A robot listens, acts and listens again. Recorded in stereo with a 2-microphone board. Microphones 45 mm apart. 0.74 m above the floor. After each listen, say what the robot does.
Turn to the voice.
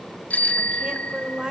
Turn 15° right.
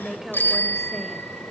Facing the woman speaking, 2 to 4 m away.